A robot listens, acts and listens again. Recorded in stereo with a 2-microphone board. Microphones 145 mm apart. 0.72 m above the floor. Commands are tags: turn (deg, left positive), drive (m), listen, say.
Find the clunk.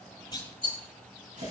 <turn deg="30"/>
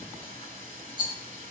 <listen/>
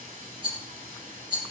<say>I heard a clunk, but can't make it out now. It was about straight ahead or 120° left.</say>